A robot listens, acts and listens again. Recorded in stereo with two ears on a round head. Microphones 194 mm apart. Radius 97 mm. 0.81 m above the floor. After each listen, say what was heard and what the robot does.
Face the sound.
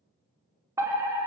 Turn 30° right.
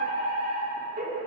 So it is at 135° right. Turn 135° right.
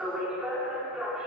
Facing the fire alarm, 2 to 4 m away.